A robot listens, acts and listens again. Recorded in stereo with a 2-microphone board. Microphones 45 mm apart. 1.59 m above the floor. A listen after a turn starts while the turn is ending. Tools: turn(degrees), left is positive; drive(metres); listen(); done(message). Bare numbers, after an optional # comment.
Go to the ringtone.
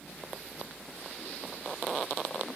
listen()
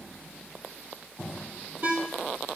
# The ringtone: about 50° right or 130° right.
turn(-50)
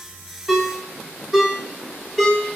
drive(1.0)
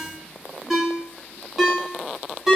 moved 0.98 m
drive(1.0)
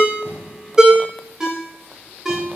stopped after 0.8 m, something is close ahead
# The ringtone is now 15° right.
turn(-15)
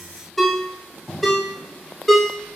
done("I am next to the ringtone.")